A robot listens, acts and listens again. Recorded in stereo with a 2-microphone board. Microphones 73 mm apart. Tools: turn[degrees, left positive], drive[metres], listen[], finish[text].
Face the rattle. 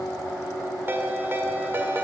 Action: listen[]
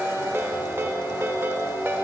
Action: listen[]
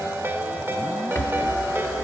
Thought: The rattle: about 35° left or 145° left.
Action: turn[35]
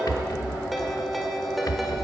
Thought: So it is at 105° left.
Action: turn[105]
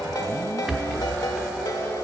Action: finish[Facing the rattle, under 1 m away.]